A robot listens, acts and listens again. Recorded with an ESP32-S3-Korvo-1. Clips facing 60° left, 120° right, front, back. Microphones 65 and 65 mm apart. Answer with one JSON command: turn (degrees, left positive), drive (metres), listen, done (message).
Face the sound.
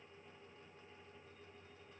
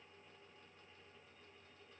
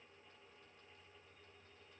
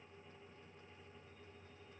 {"listen": true}
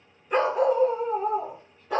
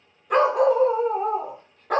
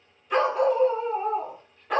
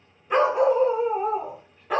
{"turn": -90}
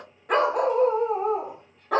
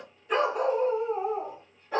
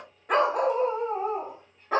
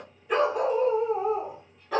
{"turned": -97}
{"turn": 55}
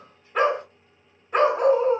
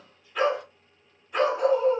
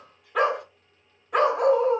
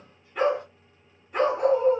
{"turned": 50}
{"turn": 15}
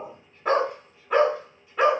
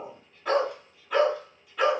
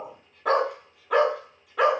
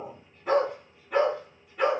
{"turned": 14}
{"done": "Found it: a dog barking, straight ahead."}